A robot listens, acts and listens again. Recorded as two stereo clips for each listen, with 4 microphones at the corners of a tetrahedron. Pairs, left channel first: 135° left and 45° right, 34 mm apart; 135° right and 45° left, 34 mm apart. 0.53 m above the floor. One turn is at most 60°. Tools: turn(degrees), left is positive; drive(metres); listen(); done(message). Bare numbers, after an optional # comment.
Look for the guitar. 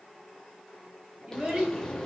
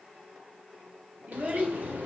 listen()
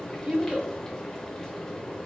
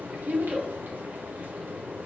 listen()
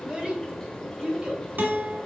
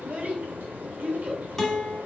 # The guitar: 50° right.
turn(-50)
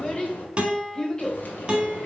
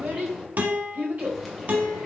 # The guitar is now 15° left.
turn(15)
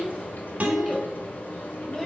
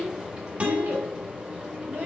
done("Found it: a guitar, straight ahead.")